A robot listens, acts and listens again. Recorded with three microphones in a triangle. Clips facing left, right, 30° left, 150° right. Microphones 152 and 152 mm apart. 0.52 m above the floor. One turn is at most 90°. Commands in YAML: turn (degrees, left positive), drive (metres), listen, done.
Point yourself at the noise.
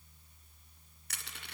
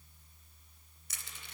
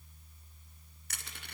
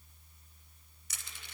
turn: 60
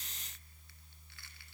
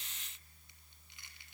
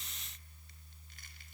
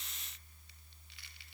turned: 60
listen: true
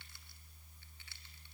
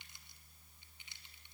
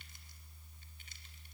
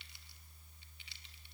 listen: true
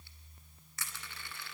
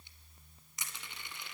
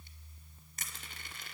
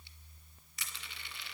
turn: -20
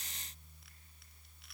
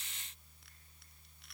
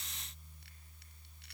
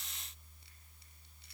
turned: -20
listen: true
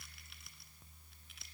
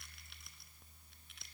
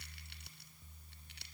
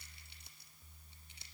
done: "Facing the crushing, 1 to 2 m away."